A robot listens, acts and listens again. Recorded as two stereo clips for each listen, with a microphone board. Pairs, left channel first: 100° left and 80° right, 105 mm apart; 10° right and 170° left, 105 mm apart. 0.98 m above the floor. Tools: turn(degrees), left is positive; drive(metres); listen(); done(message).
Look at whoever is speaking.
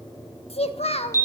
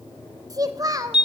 turn(degrees=115)
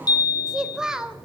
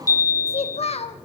done("Facing the child speaking, 1 to 2 m away.")